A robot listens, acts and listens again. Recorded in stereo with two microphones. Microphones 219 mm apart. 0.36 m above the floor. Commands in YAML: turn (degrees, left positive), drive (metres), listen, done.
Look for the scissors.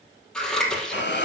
turn: 30
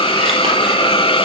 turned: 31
listen: true
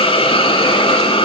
listen: true
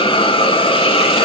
done: "I heard scissors, but can't make it out now. It was about 30° right or 145° left."